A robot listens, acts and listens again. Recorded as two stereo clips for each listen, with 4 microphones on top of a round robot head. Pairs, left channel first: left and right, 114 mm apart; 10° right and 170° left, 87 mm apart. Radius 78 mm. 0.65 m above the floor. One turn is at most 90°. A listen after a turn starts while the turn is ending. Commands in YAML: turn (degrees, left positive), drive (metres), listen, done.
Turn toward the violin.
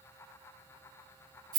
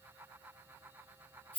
listen: true
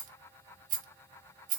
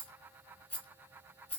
listen: true
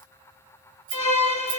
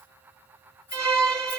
turn: 90
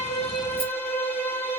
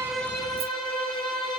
turn: 25
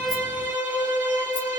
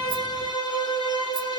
turn: -15
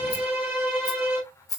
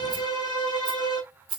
done: "Found it: a violin, straight ahead, 2 to 4 m away."